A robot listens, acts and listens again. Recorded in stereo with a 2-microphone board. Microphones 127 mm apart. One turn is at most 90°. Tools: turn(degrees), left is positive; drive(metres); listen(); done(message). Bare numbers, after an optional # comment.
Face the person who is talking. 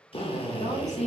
# The woman speaking: about 60° left or 120° left.
turn(60)
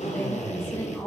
# So it is at 20° left.
turn(20)
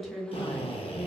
done("Facing the woman speaking, 1 to 2 m away.")